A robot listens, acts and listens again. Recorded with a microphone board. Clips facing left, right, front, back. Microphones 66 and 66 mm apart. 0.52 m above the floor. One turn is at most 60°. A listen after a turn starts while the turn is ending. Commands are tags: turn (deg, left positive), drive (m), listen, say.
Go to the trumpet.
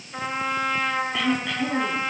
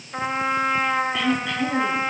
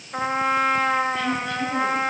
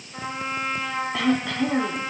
<turn deg="-25"/>
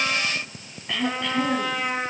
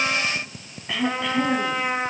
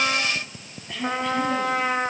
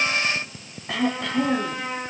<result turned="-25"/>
<turn deg="-15"/>
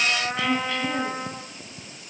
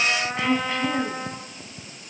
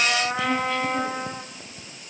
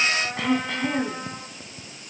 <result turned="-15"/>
<drive m="1.0"/>
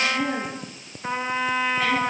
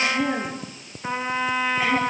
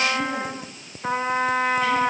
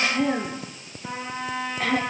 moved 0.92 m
<drive m="1.0"/>
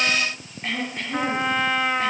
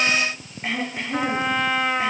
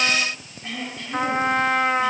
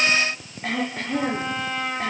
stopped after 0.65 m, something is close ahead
<say>Arrived at the trumpet, straight ahead.</say>